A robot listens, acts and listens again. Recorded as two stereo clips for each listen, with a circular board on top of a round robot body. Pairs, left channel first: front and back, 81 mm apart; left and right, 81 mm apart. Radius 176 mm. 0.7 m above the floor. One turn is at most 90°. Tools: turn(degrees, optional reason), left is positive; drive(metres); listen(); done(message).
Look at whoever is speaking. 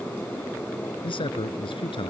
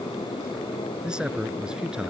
turn(degrees=-10, reason="The man speaking: 10° right.")
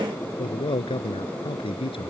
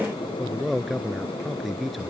done("Found it: a man speaking, straight ahead.")